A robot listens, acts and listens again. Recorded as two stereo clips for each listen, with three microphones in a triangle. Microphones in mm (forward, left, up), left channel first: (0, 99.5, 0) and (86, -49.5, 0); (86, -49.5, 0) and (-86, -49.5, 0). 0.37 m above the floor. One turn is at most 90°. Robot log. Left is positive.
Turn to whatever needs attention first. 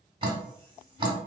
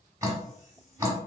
cmd idle
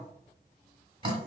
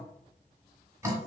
cmd idle
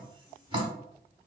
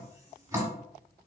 end: I can't make out anything urgent, only dripping.